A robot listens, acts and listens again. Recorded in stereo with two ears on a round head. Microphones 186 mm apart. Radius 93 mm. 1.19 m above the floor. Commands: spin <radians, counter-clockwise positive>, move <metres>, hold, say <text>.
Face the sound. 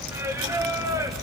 spin -0.26
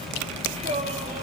spin -0.52
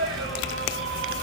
spin -2.01
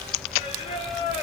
spin 0.52
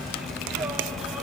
hold
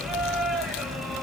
say Found it: singing, straight ahead, over 4 m away.